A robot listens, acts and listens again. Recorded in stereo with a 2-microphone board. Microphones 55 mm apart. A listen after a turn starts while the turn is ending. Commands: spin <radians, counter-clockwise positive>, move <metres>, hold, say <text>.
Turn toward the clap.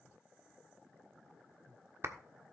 spin -0.96
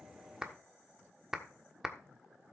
spin -0.17
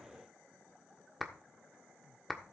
say Found it: a clap, straight ahead, 1 to 2 m away.